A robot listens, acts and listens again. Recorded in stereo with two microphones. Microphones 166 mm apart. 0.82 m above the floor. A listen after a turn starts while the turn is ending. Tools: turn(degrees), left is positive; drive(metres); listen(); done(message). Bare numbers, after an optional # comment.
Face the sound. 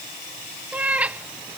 turn(-30)
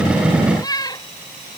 # So it is at 20° left.
turn(20)
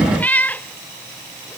# The cat meowing is now 10° left.
turn(10)
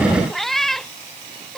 done("Facing the cat meowing.")